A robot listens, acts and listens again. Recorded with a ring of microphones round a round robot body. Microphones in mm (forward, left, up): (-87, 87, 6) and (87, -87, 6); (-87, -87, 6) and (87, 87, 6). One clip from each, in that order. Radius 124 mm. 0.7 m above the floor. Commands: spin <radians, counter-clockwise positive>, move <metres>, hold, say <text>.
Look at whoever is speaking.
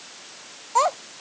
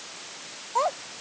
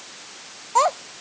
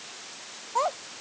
spin 3.05
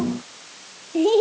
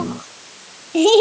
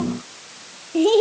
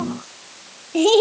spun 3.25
spin -0.17
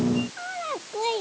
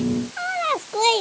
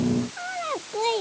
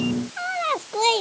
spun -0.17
say Found it: a child speaking, straight ahead.